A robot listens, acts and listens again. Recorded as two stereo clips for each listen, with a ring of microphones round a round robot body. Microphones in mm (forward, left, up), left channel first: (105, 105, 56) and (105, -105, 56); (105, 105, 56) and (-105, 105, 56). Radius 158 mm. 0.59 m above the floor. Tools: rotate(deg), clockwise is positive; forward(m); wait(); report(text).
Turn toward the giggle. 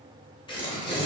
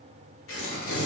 wait()
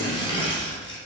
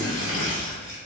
wait()
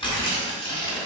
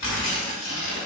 report("I can't make out a giggle, only tearing paper.")